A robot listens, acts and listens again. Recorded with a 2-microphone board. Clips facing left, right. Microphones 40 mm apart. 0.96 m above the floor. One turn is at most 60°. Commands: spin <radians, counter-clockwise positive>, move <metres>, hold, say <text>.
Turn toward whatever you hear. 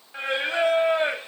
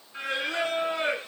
spin 0.61
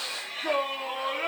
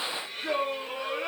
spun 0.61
spin 1.05
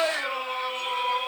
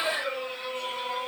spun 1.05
spin 1.05
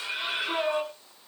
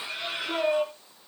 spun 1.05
spin 0.44
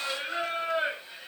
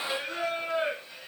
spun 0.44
spin 0.26
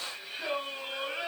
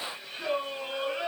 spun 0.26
say Found it: singing, straight ahead, over 4 m away.